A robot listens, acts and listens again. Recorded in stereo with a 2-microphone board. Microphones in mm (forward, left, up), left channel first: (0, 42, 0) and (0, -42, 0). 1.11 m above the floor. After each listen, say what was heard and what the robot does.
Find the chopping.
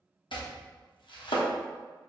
The chopping: about 70° left or 110° left. Turn 70° left.
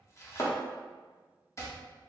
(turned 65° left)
So it is at 35° left. Turn 35° left.
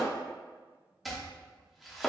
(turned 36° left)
Facing the chopping.